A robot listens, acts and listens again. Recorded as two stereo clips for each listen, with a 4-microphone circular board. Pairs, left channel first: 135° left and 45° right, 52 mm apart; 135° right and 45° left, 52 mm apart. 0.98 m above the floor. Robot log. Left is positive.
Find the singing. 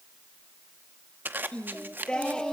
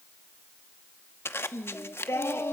note: The singing: 150° right.
cmd yaw -150
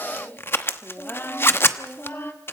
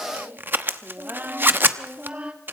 note: The singing is now 105° left.
cmd yaw +105
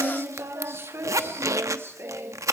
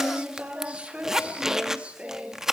note: The singing is now 20° right.
cmd yaw -20
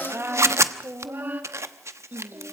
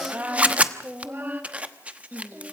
end: Found it: singing, straight ahead.